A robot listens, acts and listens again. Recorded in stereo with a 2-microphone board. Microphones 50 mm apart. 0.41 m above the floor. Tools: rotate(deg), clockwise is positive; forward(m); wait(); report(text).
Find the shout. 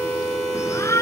rotate(-65)
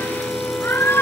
rotate(-50)
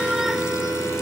wait()
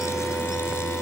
wait()
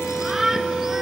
report("Found it: a shout, straight ahead.")